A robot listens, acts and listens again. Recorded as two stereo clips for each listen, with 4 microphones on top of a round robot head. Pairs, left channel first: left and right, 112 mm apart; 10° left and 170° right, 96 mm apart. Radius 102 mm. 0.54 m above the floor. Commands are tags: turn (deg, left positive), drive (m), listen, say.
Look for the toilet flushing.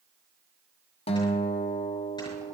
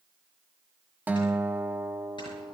<listen/>
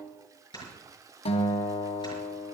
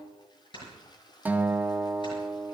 <turn deg="-30"/>
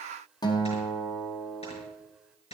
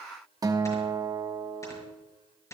<listen/>
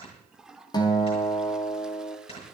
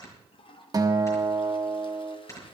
<say>Found it: a toilet flushing, straight ahead, 1 to 2 m away.</say>